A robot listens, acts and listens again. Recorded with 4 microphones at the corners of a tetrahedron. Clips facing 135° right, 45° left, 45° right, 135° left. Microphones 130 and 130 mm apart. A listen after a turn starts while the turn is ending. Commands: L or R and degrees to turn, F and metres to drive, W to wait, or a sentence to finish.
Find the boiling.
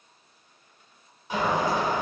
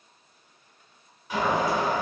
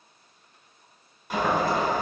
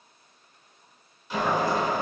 R70
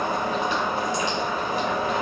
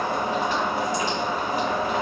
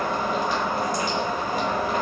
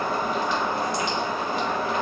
Facing the boiling.